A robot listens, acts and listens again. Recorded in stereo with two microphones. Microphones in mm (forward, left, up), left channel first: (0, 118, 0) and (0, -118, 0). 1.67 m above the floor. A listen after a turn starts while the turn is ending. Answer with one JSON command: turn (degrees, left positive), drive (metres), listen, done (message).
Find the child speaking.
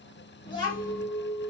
{"turn": 20}
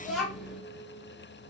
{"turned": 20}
{"done": "Facing the child speaking, 1 to 2 m away."}